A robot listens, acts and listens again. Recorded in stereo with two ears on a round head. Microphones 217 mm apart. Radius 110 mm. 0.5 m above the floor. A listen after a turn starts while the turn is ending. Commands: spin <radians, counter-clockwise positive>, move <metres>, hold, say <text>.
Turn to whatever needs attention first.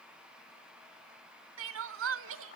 spin -0.96
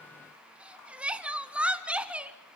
say Facing the crying, under 1 m away.